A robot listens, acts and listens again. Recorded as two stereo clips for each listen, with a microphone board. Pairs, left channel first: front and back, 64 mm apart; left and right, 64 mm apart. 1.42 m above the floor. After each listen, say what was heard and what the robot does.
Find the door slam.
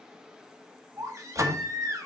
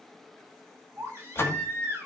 The door slam: 145° left. Turn 145° left.
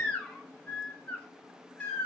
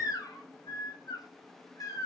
Facing where the door slam came from. I can't hear it now.